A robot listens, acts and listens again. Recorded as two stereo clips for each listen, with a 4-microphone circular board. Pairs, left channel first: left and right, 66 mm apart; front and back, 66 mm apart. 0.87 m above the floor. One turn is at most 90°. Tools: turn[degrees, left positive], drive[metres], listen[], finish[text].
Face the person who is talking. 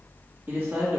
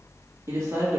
Thought: The man speaking: 145° right.
Action: turn[-90]
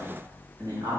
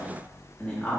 Thought: The man speaking is now 65° right.
Action: turn[-65]
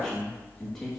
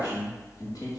Action: finish[Found it: a man speaking, straight ahead, 1 to 2 m away.]